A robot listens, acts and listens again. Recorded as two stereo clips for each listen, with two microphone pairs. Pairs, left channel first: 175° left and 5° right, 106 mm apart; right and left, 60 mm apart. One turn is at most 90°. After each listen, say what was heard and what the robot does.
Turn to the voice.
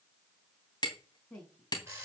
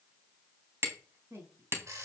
The woman speaking: 95° left. Turn 90° left.
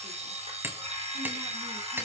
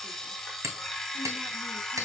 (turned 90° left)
Keep listening.
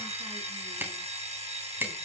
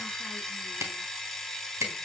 Keep listening.
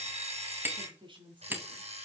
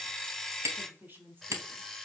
The woman speaking is now 35° left. Turn 35° left.
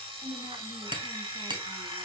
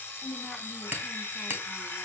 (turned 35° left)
Facing the woman speaking, 2 to 4 m away.